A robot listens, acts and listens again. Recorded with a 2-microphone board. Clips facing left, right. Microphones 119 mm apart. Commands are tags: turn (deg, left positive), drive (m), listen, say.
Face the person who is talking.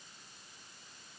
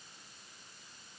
<listen/>
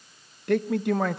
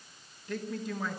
<turn deg="70"/>
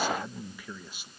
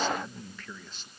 <turn deg="10"/>
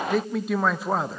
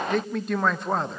<say>Found it: a man speaking, straight ahead, 1 to 2 m away.</say>